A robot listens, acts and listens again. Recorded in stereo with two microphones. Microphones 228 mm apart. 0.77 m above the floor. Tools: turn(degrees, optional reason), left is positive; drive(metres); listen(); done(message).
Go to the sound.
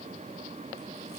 listen()
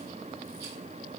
listen()
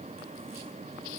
done("I can't make out anything to turn to.")